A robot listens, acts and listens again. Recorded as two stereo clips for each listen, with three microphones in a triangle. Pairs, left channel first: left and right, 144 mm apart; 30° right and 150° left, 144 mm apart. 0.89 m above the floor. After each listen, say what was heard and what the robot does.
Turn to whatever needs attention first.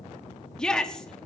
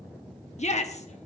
Found it: a shout, straight ahead.